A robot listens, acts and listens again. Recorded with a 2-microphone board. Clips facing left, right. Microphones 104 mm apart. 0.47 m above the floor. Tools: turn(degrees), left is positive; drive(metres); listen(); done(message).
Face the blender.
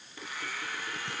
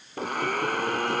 turn(degrees=-50)
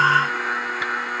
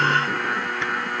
done("Facing the blender.")